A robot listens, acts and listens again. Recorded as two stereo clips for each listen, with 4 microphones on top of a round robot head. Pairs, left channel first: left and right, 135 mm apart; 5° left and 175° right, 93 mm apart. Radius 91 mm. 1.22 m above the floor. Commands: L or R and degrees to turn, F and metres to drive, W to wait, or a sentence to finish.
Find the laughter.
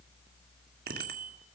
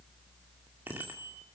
W
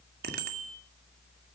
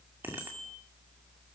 W
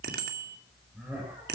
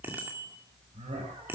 R170
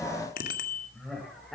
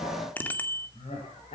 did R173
Found it: laughter, straight ahead, over 4 m away.